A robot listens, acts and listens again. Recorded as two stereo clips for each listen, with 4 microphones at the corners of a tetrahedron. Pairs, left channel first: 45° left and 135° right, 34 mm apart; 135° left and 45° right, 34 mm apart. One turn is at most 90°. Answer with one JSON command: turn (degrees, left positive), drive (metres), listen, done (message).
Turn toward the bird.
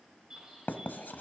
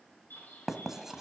{"turn": 90}
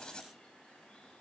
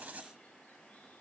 {"turn": 65}
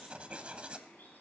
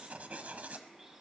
{"turn": 35}
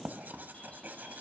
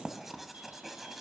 {"listen": true}
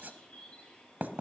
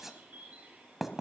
{"turn": -10}
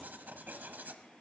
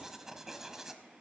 {"listen": true}
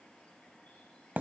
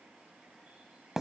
{"listen": true}
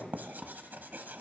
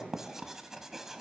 {"done": "I heard a bird from this way, but can't make it out now."}